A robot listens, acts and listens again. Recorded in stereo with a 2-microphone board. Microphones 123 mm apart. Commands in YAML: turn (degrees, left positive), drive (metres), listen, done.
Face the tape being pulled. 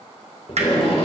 turn: 55
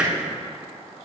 listen: true
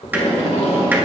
turn: 70
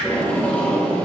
turn: 10
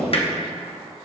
done: "Facing the tape being pulled, 1 to 2 m away."